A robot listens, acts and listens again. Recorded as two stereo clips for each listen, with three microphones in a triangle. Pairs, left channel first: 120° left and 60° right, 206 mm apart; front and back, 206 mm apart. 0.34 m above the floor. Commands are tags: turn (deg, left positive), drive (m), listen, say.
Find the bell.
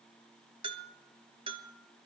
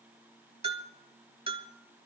<turn deg="-120"/>
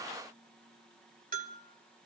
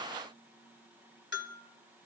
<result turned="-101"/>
<turn deg="-15"/>
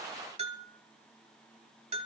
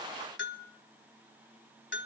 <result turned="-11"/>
<say>Facing the bell.</say>